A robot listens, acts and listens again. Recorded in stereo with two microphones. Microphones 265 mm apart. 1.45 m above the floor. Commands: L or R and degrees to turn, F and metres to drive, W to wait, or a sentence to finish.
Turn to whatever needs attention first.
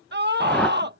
R40
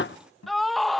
Facing the scream.